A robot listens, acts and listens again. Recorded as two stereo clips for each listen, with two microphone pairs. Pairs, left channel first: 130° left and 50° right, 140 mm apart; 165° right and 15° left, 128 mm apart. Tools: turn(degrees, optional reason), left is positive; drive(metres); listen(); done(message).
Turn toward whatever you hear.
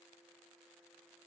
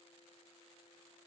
listen()
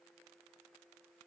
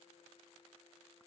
listen()
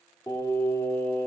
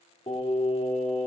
turn(degrees=-160, reason="The singing: 160° right.")
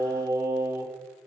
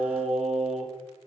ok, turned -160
turn(degrees=15, reason="The singing is now 15° left.")
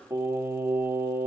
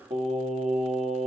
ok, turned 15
turn(degrees=15, reason="The singing is now 15° left.")
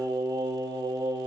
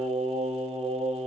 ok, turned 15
done("Facing the singing, 1 to 2 m away.")